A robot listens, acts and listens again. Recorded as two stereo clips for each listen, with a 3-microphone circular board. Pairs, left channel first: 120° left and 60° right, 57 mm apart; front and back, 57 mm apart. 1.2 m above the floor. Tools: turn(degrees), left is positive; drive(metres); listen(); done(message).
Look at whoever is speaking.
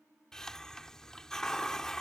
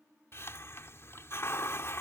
listen()
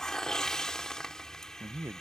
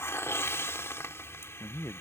turn(degrees=-30)
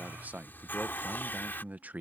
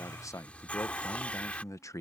done("Facing the man speaking.")